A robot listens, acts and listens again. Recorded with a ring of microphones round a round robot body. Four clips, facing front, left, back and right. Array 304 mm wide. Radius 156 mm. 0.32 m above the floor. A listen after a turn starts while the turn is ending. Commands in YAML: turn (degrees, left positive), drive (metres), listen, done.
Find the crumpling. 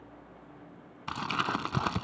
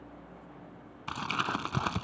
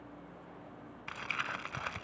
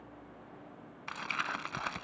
turn: 25
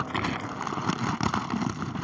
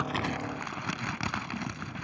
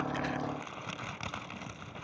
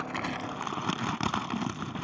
turn: -20
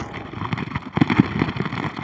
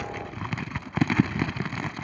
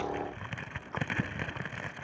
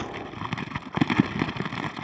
turn: -10
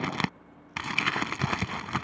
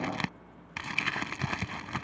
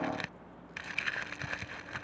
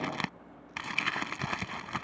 done: "Found it: crumpling, straight ahead."